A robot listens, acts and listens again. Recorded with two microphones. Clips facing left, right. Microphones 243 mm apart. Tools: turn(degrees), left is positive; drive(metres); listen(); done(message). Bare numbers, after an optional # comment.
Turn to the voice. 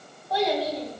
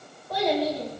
# The child speaking: about 55° right or 125° right.
turn(-55)
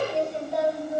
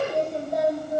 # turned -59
# So it is at 50° right.
turn(-50)
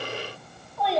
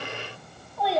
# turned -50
done("Found it: a child speaking, straight ahead.")